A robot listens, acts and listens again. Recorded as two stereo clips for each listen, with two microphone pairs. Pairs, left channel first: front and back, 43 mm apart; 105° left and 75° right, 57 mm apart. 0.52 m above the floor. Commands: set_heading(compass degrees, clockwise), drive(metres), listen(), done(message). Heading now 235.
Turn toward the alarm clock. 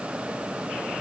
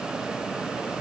listen()
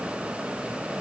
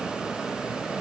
listen()
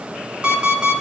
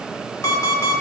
set_heading(120)
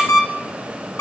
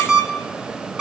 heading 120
done("Found it: an alarm clock, straight ahead, 2 to 4 m away.")